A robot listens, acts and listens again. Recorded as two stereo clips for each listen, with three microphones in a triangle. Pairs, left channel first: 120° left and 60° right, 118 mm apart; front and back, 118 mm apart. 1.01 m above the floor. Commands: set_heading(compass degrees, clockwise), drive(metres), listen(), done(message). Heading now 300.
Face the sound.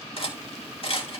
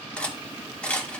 set_heading(220)
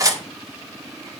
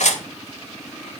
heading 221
done("Found it: cutlery clinking, straight ahead.")